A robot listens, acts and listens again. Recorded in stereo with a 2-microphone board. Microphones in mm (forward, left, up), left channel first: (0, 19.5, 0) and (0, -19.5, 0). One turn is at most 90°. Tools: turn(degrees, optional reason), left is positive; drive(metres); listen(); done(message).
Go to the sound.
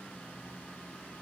listen()
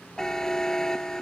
turn(degrees=15, reason="The buzzer: about 15° left or 165° left.")
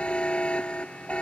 turn(degrees=90, reason="So it is at 150° left.")
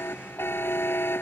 turn(degrees=80, reason="The buzzer is now 80° left.")
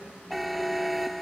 drive(metres=1.0)
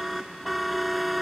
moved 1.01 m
drive(metres=1.0)
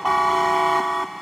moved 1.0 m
drive(metres=1.0)
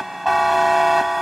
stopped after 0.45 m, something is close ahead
done("I am next to the buzzer.")